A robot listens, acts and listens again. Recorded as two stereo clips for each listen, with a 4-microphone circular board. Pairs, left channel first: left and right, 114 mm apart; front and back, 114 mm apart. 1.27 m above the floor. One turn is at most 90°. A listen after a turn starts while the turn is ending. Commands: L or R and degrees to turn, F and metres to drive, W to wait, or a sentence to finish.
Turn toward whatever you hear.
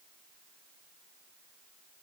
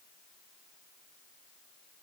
W
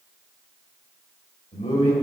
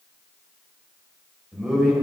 L90
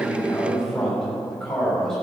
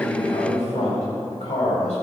Facing the man speaking.